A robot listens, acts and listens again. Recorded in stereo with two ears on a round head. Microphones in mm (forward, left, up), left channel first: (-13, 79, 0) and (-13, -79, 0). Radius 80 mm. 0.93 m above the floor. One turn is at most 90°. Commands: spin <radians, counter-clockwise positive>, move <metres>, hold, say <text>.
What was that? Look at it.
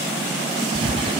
spin -0.61
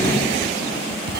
spin -1.57
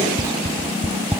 spin -0.26
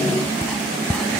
say Facing the writing.